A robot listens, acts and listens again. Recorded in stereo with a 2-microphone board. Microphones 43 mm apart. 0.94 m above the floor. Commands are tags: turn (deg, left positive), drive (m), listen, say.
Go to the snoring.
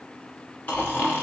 <turn deg="35"/>
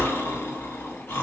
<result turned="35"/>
<turn deg="110"/>
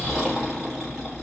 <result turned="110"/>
<drive m="1.0"/>
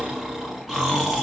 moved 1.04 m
<drive m="1.0"/>
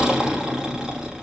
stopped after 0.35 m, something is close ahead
<turn deg="-15"/>
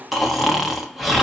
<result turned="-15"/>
<say>Arrived at the snoring, straight ahead.</say>